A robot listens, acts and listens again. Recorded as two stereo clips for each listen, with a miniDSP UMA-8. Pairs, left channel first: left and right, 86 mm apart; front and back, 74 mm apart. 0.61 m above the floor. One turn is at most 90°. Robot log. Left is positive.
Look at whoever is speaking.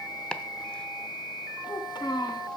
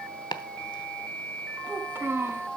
note: The child speaking: 125° left.
cmd yaw +90
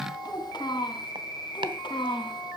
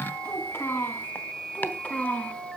note: The child speaking is now 75° left.
cmd yaw +75
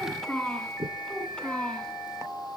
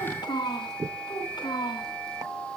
note: The child speaking is now 10° left.
cmd yaw +10
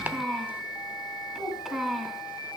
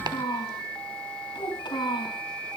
end: Found it: a child speaking, straight ahead, 2 to 4 m away.